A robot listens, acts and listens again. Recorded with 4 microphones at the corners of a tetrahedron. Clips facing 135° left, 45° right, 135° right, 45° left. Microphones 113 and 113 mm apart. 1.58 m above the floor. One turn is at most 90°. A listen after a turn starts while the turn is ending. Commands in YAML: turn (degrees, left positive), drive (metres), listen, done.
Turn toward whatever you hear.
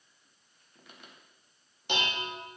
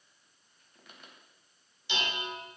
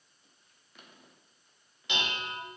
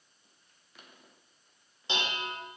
turn: 90
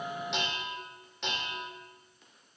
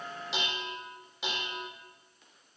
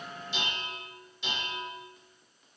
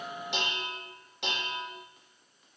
turn: 40
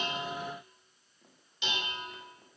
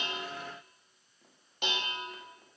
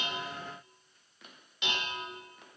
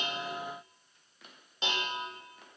turn: -10
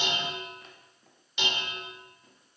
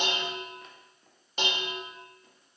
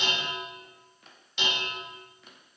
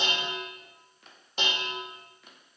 done: "Found it: dishes clattering, straight ahead."